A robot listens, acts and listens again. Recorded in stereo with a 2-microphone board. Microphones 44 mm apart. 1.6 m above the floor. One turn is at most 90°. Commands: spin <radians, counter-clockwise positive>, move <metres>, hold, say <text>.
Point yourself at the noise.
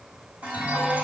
spin -0.70
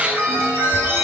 spin -1.57
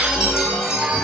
spin -0.17
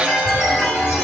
say Found it: a chime, straight ahead, over 4 m away.